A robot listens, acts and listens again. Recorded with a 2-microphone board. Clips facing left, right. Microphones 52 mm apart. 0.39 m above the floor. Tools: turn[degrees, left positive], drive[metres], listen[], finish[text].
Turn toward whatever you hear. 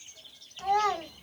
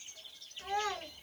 Thought: The child speaking: about 60° left or 120° left.
Action: turn[60]
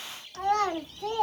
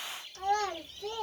Thought: So it is at 70° left.
Action: turn[70]
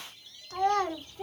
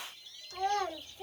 Thought: The child speaking is now 40° left.
Action: turn[40]
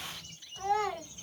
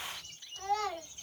Thought: The child speaking is now 15° left.
Action: turn[15]
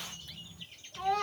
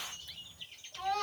Action: finish[Facing the child speaking, 2 to 4 m away.]